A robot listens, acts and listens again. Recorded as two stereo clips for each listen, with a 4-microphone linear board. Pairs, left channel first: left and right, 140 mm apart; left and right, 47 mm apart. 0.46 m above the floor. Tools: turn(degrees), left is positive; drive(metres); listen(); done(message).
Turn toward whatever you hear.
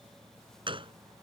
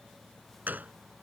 turn(degrees=-40)
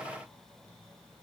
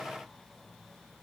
listen()
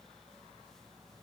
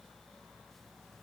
done("I heard a gunshot, but can't make it out now. It was about straight ahead or 100° right.")